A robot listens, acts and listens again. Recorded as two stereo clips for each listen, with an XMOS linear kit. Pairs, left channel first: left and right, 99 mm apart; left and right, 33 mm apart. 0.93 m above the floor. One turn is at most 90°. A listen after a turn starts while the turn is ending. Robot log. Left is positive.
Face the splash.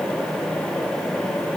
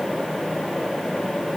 cmd idle
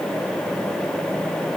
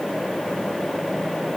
cmd idle
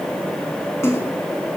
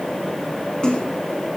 note: The splash: about 30° left or 150° left.
cmd yaw +30
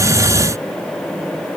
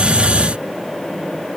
cmd idle
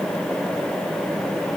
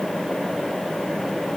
end: I heard a splash, but can't make it out now. It was about straight ahead or 120° left.